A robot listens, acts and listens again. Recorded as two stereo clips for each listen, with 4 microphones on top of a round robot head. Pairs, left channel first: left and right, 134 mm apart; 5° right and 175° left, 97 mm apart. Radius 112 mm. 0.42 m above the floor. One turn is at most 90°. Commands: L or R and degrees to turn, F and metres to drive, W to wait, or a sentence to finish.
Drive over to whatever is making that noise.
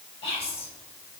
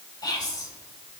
L40
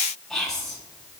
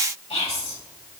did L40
F1.0
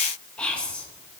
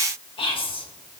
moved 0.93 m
L10
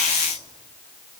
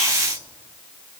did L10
W
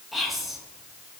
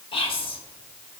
F1.0
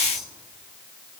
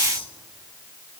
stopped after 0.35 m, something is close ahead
Arrived at the whispering, straight ahead.